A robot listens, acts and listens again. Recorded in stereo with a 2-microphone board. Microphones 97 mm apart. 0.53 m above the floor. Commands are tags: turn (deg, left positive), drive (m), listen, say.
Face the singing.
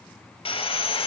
<listen/>
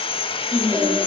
<turn deg="-35"/>
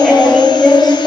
<say>Found it: singing, straight ahead.</say>